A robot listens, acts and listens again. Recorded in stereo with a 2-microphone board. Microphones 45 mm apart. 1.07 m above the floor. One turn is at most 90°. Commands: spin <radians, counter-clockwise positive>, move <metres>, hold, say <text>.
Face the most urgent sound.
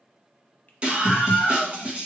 spin -0.44
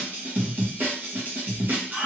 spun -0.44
spin -1.57
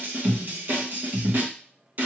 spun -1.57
spin -0.96
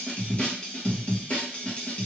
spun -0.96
spin 0.44
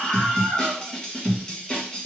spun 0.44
spin 0.26
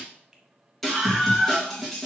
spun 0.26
say Facing the scream.